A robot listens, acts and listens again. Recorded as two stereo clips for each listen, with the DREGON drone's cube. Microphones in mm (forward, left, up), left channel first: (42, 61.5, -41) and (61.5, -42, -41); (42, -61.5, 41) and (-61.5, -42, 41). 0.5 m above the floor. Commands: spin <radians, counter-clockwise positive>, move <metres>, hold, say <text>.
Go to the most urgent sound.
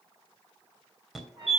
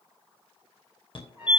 spin 0.17
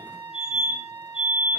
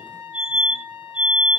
move 1.0
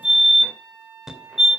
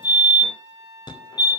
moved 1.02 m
move 1.0
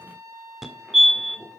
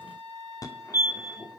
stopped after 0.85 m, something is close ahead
say Arrived at the fire alarm, straight ahead.